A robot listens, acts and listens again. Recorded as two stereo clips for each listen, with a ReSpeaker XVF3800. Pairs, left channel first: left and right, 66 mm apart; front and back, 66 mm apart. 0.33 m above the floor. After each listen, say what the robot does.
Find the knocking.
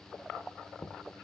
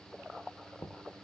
Turn 30° left.
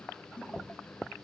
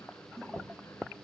Turn 20° right.
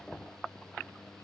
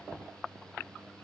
Turn 10° left.
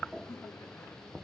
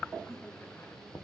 Facing the knocking.